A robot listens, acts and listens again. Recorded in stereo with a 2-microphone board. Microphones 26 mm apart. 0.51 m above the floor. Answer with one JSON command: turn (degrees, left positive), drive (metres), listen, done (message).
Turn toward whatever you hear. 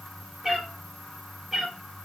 {"turn": -30}
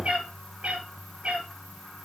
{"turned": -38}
{"turn": -135}
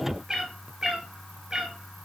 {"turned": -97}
{"turn": -30}
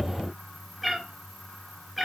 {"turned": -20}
{"turn": -10}
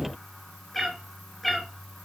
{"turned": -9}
{"done": "Facing the cat meowing."}